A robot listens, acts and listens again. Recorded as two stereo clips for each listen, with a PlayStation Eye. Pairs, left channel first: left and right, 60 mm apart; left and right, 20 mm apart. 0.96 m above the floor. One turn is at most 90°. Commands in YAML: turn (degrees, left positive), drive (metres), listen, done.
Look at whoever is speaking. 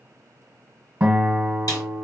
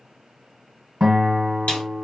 listen: true
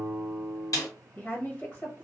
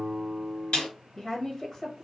turn: 30
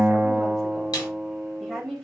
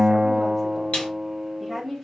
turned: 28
turn: 10
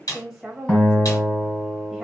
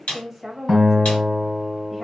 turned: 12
done: "Facing the woman speaking."